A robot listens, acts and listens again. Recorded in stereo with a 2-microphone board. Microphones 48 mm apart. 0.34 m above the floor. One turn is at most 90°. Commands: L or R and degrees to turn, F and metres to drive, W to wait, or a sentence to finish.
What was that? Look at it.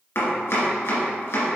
L65
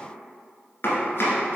L50
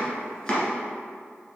L10
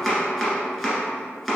Facing the chopping.